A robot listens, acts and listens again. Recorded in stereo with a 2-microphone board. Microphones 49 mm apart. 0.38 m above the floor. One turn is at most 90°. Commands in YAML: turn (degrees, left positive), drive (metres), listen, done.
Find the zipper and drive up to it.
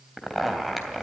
turn: -30
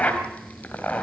turn: 30
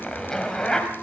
turn: 15
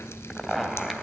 drive: 1.0
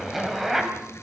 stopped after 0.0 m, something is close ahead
done: "Blocked. The zipper is further on, straight ahead."